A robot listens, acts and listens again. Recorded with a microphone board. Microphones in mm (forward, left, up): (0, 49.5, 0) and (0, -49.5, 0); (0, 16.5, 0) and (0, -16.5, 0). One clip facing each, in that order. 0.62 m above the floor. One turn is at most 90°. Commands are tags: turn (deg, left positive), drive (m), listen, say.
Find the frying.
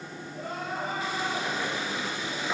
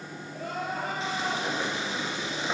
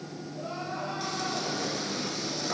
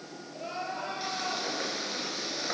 <turn deg="-25"/>
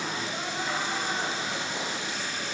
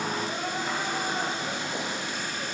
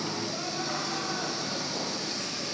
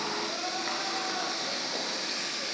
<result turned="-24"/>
<turn deg="-90"/>
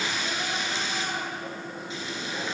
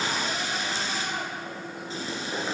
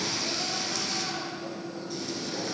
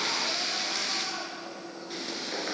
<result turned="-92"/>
<turn deg="-35"/>
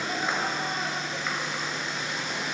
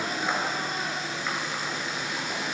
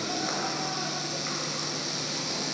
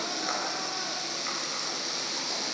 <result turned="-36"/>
<say>Facing the frying, 2 to 4 m away.</say>